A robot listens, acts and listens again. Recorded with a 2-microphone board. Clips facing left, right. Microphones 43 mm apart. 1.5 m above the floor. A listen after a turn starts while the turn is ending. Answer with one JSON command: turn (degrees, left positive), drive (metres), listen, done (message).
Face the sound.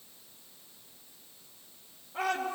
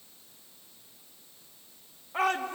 {"turn": -65}
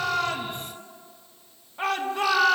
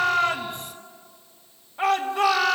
{"done": "Facing the shout."}